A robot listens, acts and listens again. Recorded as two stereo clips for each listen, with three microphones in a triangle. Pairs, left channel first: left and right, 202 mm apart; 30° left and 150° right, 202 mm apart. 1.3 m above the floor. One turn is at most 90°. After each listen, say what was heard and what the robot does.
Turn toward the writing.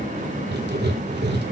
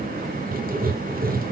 The writing: 110° right. Turn 90° right.
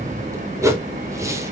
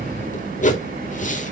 The writing is now 20° right. Turn 20° right.
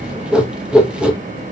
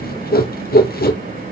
Found it: writing, straight ahead.